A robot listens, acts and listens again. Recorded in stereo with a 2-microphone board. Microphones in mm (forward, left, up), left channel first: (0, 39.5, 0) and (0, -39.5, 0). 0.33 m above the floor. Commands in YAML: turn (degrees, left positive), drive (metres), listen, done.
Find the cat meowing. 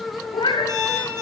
turn: 90
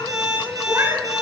turn: -40
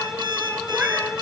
listen: true
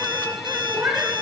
turn: -30
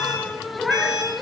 done: "Found it: a cat meowing, straight ahead, 2 to 4 m away."